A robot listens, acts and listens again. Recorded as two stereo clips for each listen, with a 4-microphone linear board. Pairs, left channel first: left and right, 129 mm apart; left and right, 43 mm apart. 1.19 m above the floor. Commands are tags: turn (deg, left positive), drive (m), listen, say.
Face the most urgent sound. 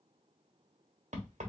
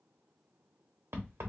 <listen/>
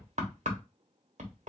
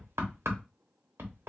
<listen/>
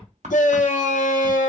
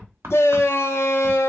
<turn deg="90"/>
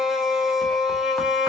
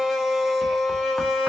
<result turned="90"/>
<say>Found it: a shout, straight ahead, under 1 m away.</say>